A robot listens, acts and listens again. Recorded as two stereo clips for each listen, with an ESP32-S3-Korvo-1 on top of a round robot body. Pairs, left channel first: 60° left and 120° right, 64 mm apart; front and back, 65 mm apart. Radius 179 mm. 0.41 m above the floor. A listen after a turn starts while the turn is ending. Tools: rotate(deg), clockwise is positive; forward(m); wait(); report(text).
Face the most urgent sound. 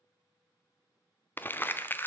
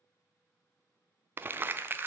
wait()
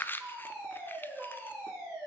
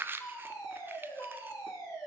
rotate(40)
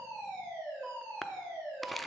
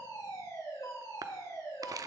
rotate(15)
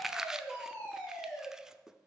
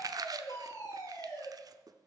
report("Facing the fire alarm.")